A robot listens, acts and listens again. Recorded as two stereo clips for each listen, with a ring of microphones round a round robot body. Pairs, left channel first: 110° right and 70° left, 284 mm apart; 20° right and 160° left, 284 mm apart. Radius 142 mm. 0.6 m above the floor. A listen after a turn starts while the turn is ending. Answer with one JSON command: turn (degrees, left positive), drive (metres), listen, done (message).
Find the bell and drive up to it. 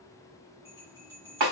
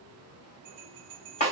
{"turn": 145}
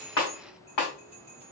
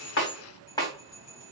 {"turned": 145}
{"drive": 1.0}
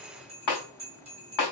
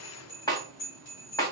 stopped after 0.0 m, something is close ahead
{"done": "Something is in my way. I am facing the bell but have not reached it."}